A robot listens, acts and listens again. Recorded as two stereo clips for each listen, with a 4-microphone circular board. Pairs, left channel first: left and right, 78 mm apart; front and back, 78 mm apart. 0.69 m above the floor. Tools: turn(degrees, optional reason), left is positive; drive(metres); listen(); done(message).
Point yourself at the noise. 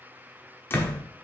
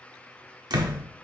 turn(degrees=150, reason="The door slam: 150° left.")
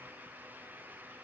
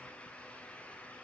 done("I heard a door slam from this way, but can't make it out now.")